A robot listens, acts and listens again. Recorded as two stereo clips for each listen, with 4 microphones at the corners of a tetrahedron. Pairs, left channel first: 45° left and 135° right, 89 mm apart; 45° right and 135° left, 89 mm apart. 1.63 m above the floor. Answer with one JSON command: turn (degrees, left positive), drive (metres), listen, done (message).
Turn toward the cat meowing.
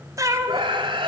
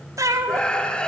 {"turn": 180}
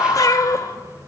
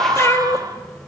{"done": "Facing the cat meowing, 1 to 2 m away."}